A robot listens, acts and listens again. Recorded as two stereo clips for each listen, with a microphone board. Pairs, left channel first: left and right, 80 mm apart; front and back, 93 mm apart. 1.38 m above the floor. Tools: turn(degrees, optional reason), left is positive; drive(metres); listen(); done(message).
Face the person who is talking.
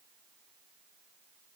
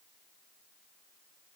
listen()
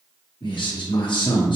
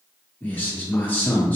turn(degrees=70, reason="The man speaking: 70° left.")
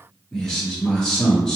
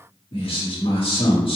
done("Facing the man speaking.")